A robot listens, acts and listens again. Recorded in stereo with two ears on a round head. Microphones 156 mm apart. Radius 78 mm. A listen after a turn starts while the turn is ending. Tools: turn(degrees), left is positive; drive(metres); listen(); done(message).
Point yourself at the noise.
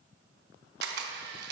turn(degrees=-60)
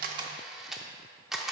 done("Found it: a camera shutter, straight ahead, under 1 m away.")